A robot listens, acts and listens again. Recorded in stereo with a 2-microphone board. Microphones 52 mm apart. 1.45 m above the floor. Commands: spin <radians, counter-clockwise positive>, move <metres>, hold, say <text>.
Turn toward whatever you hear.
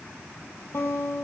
spin 1.05
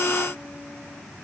hold
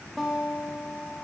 say Found it: a guitar, straight ahead.